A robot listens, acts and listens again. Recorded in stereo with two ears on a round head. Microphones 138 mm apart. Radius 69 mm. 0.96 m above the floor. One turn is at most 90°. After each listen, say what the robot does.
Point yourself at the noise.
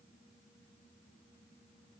Keep listening.
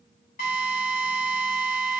Turn 60° left.
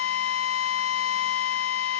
Turn 60° left.
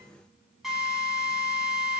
Facing the drill, over 4 m away.